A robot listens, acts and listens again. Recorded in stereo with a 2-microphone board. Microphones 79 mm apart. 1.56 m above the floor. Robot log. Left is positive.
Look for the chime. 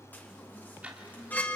note: The chime: about 20° left or 160° left.
cmd yaw +20
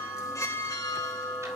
note: So it is at 140° left.
cmd yaw +140
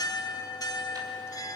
note: The chime is now 45° left.
cmd yaw +45
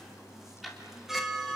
end: Found it: a chime, straight ahead.